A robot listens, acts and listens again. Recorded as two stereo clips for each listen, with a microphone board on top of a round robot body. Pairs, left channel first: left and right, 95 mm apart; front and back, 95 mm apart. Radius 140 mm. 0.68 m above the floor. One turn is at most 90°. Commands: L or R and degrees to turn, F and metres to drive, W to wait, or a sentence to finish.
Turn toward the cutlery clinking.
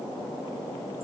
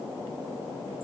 W
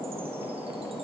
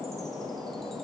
W
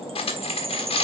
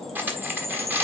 L90
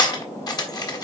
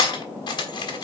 L40
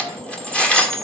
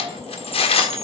L10
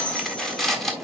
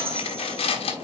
Found it: cutlery clinking, straight ahead, 1 to 2 m away.